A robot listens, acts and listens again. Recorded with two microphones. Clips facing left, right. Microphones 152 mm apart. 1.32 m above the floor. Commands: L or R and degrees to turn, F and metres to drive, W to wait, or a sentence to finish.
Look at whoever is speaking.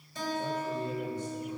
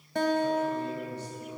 L45
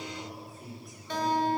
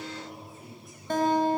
Facing the man speaking.